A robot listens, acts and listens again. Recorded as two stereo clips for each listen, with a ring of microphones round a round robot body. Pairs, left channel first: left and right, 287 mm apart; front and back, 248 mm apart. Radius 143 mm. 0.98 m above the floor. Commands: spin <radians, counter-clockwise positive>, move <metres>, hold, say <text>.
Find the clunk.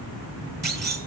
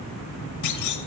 spin -0.52
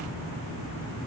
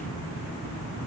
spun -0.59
say I heard a clunk from this way, but can't make it out now.